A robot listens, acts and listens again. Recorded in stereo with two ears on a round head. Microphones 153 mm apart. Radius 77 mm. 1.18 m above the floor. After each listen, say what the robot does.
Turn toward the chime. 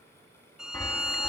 Turn 30° left.
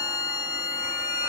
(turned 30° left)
Keep listening.
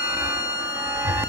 Turn 15° right.
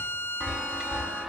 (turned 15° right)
Found it: a chime, straight ahead.